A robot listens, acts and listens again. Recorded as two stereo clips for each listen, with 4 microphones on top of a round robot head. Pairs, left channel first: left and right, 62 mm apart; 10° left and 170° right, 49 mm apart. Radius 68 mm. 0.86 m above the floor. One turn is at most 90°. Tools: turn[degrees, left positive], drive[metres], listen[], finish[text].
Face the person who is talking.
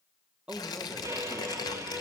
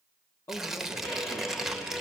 Thought: The man speaking: 20° right.
Action: turn[-20]
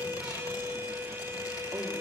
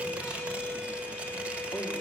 Action: listen[]
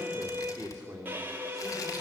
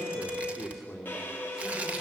Thought: The man speaking is now 40° right.
Action: turn[-40]
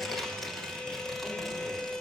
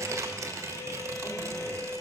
Action: listen[]
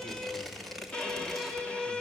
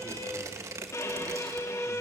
Action: listen[]
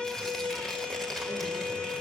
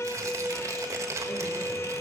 Action: finish[Facing where the man speaking came from. I can't hear it now.]